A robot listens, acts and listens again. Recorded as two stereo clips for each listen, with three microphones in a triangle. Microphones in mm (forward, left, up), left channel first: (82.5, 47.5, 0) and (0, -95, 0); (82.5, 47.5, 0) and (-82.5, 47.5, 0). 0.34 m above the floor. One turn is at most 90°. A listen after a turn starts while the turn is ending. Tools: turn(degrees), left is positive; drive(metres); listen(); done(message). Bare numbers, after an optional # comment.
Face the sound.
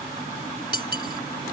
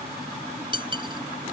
# The cutlery clinking: 120° right.
turn(-90)
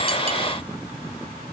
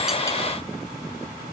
# Nothing new. It was at 30° right.
turn(-30)
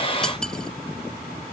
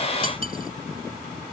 listen()
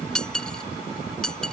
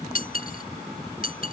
# The cutlery clinking is now 25° right.
turn(-25)
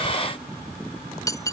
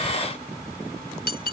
# The cutlery clinking is now 10° right.
turn(-10)
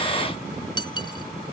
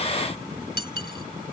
done("Facing the cutlery clinking.")